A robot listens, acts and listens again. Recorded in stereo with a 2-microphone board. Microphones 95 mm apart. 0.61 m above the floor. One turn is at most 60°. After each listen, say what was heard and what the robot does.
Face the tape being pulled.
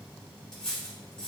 Keep listening.
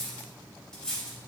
Keep listening.
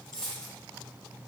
I can't make out tape being pulled to turn to.